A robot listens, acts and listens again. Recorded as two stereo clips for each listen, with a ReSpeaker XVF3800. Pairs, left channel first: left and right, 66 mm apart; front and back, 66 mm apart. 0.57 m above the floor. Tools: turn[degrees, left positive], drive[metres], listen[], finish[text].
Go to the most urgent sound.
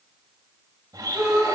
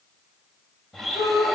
Thought: The shout: 20° right.
Action: turn[-20]
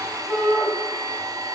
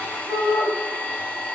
Action: drive[1.0]
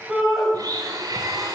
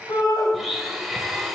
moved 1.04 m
Action: drive[1.0]
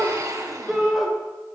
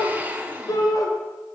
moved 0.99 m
Action: drive[1.0]
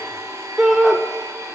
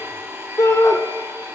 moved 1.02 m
Thought: The shout is now 10° right.
Action: turn[-10]
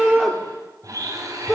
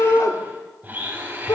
Action: drive[1.0]
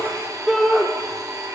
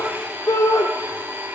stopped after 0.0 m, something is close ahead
Action: finish[I am next to the shout.]